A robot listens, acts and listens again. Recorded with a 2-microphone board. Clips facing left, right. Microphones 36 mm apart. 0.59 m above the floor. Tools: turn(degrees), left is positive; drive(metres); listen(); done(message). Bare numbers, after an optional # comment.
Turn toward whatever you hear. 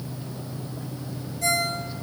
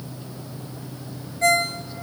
# The ringtone: about 45° right or 135° right.
turn(-45)
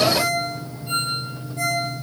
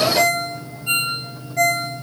# So it is at 90° right.
turn(-90)
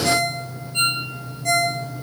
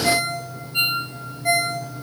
# The ringtone is now 20° right.
turn(-20)
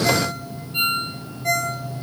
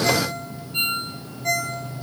done("Found it: a ringtone, straight ahead.")